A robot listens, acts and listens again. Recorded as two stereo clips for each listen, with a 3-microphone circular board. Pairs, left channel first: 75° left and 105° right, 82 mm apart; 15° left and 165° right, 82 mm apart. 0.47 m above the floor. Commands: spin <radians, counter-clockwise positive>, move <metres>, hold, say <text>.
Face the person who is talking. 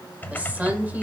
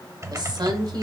spin -3.05
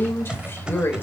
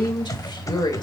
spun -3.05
spin 0.35
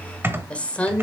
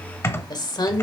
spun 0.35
say Facing the woman speaking, 1 to 2 m away.